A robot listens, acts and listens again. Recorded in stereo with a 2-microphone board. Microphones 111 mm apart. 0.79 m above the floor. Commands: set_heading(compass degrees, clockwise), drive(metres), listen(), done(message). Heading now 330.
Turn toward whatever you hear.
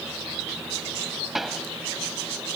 set_heading(300)
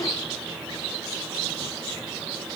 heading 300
listen()
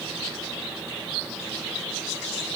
done("I heard a pop, but can't make it out now. It was about 30° right or 150° left.")